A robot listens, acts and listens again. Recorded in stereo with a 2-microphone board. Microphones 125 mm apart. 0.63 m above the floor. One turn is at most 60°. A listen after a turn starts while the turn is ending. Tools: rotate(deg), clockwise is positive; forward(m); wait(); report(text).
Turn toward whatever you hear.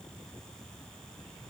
wait()
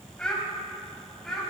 rotate(-30)
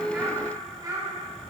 rotate(30)
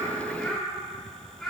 report("Found it: a child speaking, straight ahead, over 4 m away.")